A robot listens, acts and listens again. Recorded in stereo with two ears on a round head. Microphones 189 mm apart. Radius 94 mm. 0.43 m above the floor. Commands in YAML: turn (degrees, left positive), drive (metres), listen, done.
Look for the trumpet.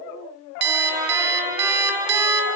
turn: -15
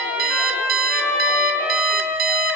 done: "Facing the trumpet, 2 to 4 m away."